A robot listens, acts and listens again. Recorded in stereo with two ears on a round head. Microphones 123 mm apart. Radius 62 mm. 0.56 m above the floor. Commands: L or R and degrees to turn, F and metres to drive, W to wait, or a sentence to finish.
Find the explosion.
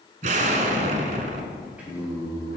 R65
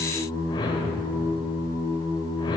W
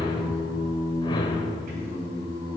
I heard an explosion, but can't make it out now. It was about straight ahead or 50° right.